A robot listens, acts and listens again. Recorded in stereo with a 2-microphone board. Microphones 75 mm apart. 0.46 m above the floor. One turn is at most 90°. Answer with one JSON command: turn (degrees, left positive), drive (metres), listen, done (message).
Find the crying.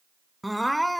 {"turn": 30}
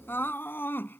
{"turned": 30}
{"turn": 90}
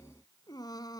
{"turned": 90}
{"turn": 70}
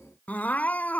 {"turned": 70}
{"turn": 20}
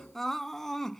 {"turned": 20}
{"done": "Found it: crying, straight ahead."}